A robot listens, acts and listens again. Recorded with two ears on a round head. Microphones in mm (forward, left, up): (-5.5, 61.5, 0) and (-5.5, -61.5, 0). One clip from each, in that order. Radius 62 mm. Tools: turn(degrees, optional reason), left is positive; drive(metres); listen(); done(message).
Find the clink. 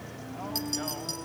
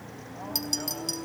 turn(degrees=-25, reason="The clink: about 25° right or 155° right.")
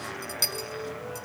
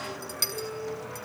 done("Facing the clink, over 4 m away.")